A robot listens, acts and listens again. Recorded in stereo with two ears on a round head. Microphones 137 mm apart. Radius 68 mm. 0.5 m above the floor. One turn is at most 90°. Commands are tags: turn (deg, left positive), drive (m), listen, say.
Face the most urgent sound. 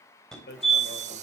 <turn deg="30"/>
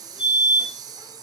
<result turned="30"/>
<turn deg="90"/>
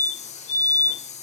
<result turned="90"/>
<turn deg="55"/>
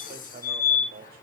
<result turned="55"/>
<turn deg="20"/>
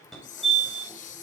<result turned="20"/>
<say>Facing the fire alarm, over 4 m away.</say>